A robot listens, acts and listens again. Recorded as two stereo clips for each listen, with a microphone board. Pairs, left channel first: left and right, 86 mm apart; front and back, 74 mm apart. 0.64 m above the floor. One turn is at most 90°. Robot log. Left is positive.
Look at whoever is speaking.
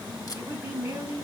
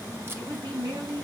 note: The woman speaking: 155° right.
cmd yaw -90
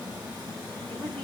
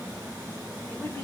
note: Nothing new. It was at 65° right.
cmd yaw -65
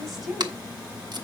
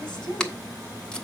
end: Facing the woman speaking, over 4 m away.